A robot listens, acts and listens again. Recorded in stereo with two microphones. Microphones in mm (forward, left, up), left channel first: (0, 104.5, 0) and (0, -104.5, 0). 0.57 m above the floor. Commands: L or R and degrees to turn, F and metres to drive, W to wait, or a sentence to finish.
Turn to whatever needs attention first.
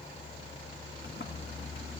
W
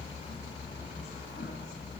W
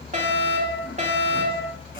R35
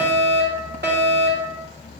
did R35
R100
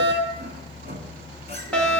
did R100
Found it: a fire alarm, straight ahead, 2 to 4 m away.